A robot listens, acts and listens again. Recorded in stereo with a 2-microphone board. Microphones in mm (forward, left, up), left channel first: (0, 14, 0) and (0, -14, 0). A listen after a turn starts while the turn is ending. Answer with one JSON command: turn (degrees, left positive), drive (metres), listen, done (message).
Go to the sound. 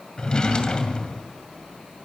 {"turn": 30}
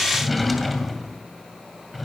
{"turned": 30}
{"drive": 1.0}
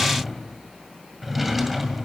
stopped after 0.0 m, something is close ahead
{"done": "Blocked. The drawer is further on, straight ahead."}